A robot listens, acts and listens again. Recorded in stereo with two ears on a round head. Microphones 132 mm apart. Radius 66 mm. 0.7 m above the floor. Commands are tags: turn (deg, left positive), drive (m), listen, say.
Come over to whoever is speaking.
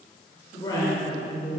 <turn deg="30"/>
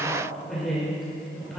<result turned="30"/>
<drive m="1.0"/>
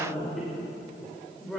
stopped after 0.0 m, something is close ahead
<say>Something is in my way. I am facing the woman speaking but have not reached it.</say>